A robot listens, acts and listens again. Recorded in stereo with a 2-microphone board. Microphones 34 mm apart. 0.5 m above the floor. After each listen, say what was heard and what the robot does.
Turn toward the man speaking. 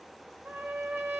Keep listening.
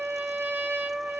Keep listening.
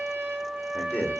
The man speaking: about 55° left or 125° left. Turn 55° left.
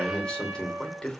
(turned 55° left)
So it is at 30° left. Turn 30° left.
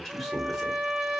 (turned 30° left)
Facing the man speaking.